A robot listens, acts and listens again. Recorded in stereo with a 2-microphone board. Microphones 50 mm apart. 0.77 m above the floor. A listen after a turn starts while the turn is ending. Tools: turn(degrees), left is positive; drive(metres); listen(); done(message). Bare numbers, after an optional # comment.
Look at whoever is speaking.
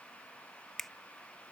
listen()
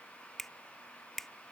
listen()
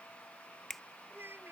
# The child speaking: about 45° right or 135° right.
turn(-45)
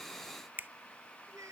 # So it is at 85° right.
turn(-85)
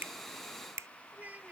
# The child speaking is now 30° right.
turn(-30)
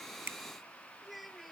done("Found it: a child speaking, straight ahead.")